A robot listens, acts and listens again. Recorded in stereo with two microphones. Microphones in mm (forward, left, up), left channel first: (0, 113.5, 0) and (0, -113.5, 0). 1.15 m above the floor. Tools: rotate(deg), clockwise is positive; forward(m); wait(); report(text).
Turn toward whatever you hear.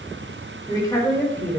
rotate(-30)
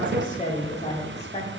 rotate(-155)
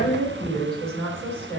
report("Facing the woman speaking, 2 to 4 m away.")